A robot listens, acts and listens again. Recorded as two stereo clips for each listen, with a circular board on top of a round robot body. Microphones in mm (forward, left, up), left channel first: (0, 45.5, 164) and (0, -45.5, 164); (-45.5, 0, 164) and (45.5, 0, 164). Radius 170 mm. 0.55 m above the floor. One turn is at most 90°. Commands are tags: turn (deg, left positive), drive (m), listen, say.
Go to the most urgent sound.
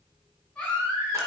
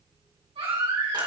<turn deg="10"/>
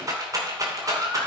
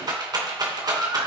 <drive m="1.0"/>
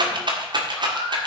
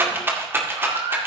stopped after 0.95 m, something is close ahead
<say>Something is in my way. I am facing the baby crying but have not reached it.</say>